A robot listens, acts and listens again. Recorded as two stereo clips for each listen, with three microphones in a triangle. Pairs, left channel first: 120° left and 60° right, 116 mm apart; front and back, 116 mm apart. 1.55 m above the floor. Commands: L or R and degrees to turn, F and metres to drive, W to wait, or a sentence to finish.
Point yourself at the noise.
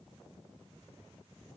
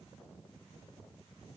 W
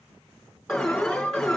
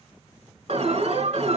R155
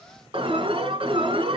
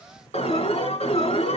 R20
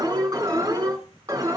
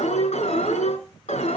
Facing the alarm, over 4 m away.